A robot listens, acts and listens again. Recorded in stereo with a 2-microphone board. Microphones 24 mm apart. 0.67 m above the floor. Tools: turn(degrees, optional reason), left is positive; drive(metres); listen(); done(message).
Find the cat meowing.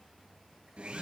listen()
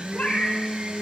turn(degrees=70, reason="The cat meowing: about 70° left or 110° left.")
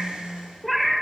done("Found it: a cat meowing, straight ahead.")